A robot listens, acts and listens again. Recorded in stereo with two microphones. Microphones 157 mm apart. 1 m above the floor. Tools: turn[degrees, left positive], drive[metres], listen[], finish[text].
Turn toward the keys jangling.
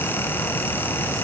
Action: listen[]
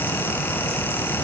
Action: listen[]
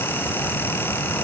Action: finish[I can't make out keys jangling.]